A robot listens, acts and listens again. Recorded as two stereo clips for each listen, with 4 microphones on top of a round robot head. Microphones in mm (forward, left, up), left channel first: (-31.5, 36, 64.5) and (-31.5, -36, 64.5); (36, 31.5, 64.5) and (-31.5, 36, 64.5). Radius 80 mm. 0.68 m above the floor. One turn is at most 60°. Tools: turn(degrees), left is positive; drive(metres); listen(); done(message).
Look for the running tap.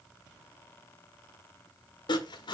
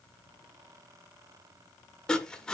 listen()
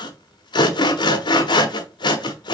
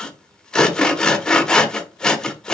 listen()
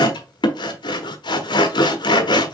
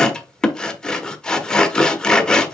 done("I can't make out a running tap to turn to.")